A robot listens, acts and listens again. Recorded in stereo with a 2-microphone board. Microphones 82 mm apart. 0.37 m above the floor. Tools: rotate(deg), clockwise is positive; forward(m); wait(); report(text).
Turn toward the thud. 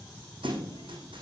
rotate(90)
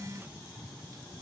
report("I heard a thud from this way, but can't make it out now.")